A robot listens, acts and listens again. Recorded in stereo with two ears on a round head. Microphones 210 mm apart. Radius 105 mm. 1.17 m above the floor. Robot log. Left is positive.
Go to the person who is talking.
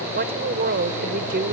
note: The woman speaking: about 45° right or 135° right.
cmd yaw -45
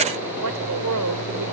note: So it is at 90° right.
cmd yaw -90
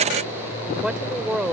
cmd fwd 1.0
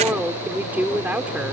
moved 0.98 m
cmd fwd 1.0
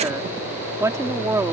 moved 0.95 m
note: The woman speaking is now 15° right.
cmd yaw -15
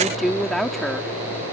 cmd fwd 1.0
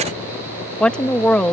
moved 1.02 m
cmd fwd 1.0
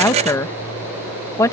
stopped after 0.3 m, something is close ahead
note: The woman speaking is now 15° left.
cmd yaw +15
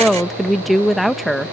end: I am next to the woman speaking.